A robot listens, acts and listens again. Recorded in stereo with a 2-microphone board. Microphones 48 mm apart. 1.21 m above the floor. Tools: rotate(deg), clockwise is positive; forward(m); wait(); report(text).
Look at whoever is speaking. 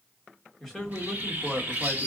rotate(-30)
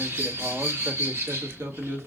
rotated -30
rotate(65)
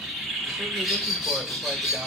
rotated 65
wait()
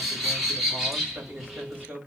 rotate(30)
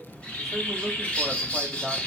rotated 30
report("Found it: a man speaking, straight ahead.")